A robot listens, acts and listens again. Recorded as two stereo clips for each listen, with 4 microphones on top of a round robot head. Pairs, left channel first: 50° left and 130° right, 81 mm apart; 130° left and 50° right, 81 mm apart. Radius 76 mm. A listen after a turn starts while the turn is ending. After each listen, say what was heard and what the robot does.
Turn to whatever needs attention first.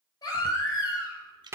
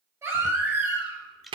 Found it: a baby crying, straight ahead.